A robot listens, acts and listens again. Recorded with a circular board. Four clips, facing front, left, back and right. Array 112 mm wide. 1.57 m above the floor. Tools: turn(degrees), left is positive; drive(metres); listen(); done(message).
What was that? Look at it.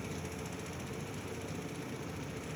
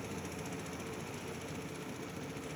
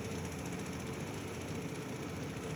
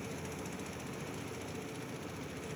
listen()
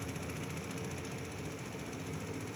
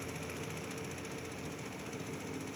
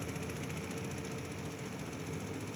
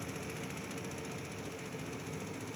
listen()
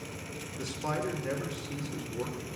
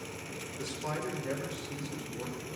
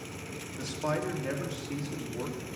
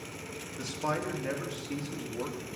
turn(degrees=-125)
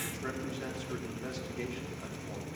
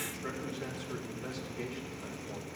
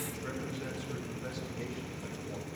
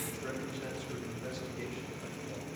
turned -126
done("Facing the man speaking, 2 to 4 m away.")